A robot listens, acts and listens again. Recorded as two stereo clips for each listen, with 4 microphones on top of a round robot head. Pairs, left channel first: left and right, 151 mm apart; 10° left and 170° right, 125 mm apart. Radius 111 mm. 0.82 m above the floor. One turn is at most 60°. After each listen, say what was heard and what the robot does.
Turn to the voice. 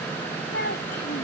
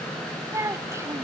The child speaking: 120° left. Turn 60° left.
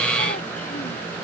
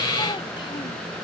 Nothing new. It was at 60° left. Turn 60° left.
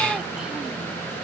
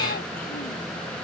Keep listening.
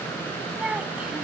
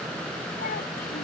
Found it: a child speaking, straight ahead.